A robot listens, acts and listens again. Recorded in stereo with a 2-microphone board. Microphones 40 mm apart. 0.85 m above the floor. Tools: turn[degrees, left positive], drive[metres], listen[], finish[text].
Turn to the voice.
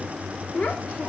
Thought: The child speaking: about 50° left or 130° left.
Action: turn[50]
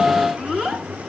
Action: finish[Found it: a child speaking, straight ahead.]